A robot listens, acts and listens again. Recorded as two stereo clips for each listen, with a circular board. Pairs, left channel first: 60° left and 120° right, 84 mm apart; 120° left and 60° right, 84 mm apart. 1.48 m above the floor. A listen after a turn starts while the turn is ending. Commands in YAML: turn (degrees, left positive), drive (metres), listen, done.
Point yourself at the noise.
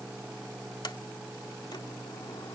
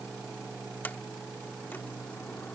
turn: 55
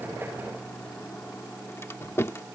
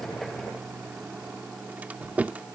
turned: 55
turn: 10
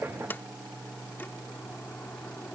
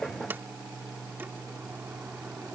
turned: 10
listen: true
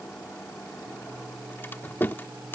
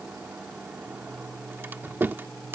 done: "Facing the sliding door."